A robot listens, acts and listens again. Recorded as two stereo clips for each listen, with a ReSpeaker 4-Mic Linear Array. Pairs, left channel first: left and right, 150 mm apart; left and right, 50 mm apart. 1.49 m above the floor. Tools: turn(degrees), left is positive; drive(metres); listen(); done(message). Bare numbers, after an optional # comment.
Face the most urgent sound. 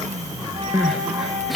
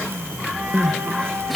turn(30)
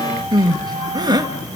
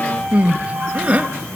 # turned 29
# So it is at 30° right.
turn(-30)
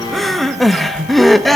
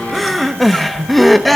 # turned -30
done("Facing the crying, 1 to 2 m away.")